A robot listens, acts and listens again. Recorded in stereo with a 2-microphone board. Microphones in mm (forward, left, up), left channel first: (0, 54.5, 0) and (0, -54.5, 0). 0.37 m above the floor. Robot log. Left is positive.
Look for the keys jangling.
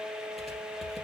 cmd idle
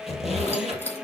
note: The keys jangling: about 20° left or 160° left.
cmd yaw +20
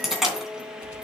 end: Found it: keys jangling, straight ahead.